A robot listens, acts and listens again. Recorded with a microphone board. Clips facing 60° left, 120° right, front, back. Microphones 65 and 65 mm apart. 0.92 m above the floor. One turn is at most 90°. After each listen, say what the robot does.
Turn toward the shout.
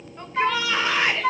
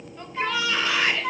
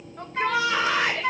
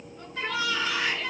Facing the shout.